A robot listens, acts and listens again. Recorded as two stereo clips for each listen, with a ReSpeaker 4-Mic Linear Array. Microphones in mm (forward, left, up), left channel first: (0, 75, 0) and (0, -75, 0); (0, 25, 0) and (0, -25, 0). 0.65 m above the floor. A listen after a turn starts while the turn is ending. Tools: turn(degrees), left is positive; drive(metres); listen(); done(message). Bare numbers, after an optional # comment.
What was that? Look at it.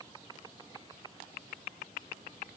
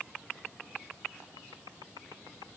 listen()
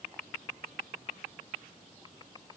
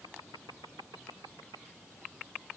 listen()
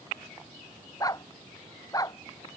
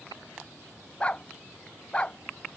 # The dog barking: about 25° left or 155° left.
turn(25)
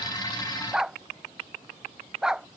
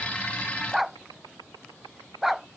done("Facing the dog barking.")